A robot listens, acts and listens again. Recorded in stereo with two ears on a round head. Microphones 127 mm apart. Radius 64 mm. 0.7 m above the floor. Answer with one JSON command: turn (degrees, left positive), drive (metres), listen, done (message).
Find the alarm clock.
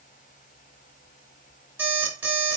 {"turn": -15}
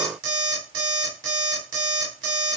{"turn": -145}
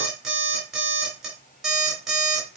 {"done": "Facing the alarm clock."}